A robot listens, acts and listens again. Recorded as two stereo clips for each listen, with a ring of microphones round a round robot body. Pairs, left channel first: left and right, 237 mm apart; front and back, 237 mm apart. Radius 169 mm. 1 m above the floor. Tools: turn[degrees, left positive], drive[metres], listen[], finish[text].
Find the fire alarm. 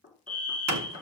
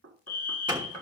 Action: finish[Found it: a fire alarm, straight ahead, over 4 m away.]